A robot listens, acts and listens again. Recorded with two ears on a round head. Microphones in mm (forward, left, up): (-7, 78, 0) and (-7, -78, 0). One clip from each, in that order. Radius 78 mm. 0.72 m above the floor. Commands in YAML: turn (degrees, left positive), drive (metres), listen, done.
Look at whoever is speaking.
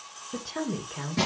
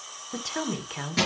turn: -60
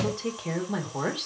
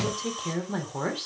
done: "Facing the woman speaking, 2 to 4 m away."